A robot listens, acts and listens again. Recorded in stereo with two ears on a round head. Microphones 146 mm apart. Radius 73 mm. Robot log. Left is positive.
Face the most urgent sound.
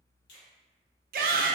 note: The shout: about 65° right or 115° right.
cmd yaw -65
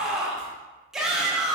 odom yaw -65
end: Found it: a shout, straight ahead, under 1 m away.